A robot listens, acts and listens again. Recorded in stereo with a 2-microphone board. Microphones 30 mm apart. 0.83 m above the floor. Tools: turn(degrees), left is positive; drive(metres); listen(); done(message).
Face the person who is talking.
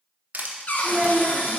turn(degrees=-35)
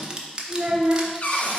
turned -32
turn(degrees=-110)
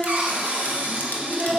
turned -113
done("Found it: a child speaking, straight ahead.")